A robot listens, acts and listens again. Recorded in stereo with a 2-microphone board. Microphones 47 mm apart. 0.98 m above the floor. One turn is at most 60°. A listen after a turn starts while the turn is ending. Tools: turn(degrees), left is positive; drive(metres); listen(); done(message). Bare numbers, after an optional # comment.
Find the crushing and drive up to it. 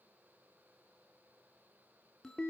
listen()
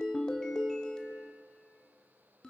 listen()
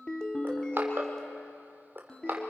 # The crushing: about 50° right or 130° right.
turn(-50)
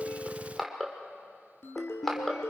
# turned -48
drive(1.0)
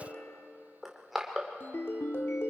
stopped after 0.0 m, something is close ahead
# The crushing is now 10° right.
turn(-10)
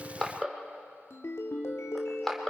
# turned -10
done("Something is in my way. I am facing the crushing but have not reached it.")